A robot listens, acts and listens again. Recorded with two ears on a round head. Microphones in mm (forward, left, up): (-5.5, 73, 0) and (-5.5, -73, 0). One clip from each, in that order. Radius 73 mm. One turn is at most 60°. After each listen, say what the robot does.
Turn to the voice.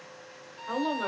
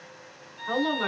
Turn 25° right.
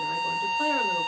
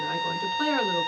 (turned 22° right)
Keep listening.
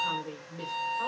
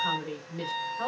Turn 60° right.
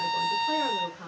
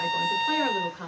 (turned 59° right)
Turn 60° right.
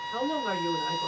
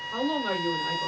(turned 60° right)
Turn 10° right.
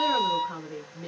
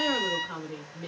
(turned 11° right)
Found it: a woman speaking, straight ahead.